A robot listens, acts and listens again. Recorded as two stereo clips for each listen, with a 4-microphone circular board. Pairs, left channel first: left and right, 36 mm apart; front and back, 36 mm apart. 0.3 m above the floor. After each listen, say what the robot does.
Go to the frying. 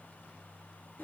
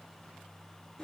Keep listening.
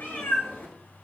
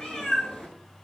Keep listening.
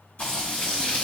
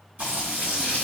Turn 135° left.
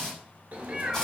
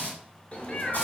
Turn 15° left.
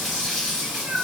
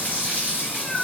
Drive 1.0 m forward.
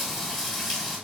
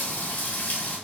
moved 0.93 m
Drive 1.0 m forward.
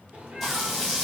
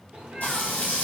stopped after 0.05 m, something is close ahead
I am next to the frying.